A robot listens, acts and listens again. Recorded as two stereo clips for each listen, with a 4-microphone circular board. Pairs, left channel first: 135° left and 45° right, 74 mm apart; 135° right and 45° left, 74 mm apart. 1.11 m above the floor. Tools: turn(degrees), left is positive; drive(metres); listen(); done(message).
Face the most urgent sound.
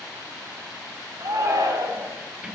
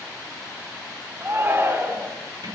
turn(degrees=-10)
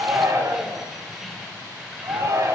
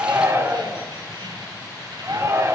done("Found it: a shout, straight ahead, over 4 m away.")